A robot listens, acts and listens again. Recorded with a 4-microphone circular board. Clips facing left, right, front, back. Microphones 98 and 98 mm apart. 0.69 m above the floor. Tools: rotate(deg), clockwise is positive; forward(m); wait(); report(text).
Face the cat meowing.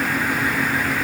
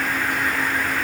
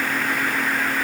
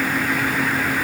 wait()
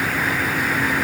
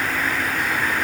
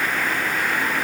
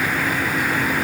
wait()
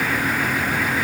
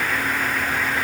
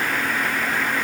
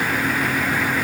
report("I can't make out a cat meowing to turn to.")